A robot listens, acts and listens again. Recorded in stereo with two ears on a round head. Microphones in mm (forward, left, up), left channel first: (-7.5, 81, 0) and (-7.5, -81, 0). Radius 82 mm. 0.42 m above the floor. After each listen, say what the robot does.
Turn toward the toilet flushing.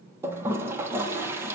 Turn 30° right.
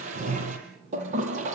Turn 135° right.
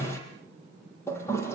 Turn 15° left.
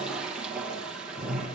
Facing the toilet flushing, over 4 m away.